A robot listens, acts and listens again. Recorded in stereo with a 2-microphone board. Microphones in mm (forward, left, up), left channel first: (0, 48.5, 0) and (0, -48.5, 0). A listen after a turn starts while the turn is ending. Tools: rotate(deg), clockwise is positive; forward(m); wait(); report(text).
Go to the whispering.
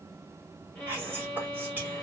rotate(20)
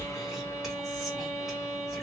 wait()
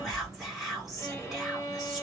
forward(1.0)
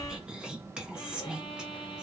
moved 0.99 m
rotate(10)
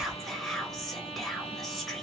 forward(1.0)
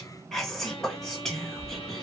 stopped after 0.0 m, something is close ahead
report("I am next to the whispering.")